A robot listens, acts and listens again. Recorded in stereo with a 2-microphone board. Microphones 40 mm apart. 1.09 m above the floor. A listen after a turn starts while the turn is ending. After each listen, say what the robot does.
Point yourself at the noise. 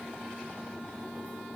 Keep listening.
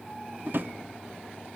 Turn 55° right.
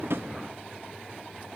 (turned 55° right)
Keep listening.
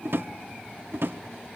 Turn 70° right.
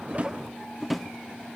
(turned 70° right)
Found it: a drawer, straight ahead.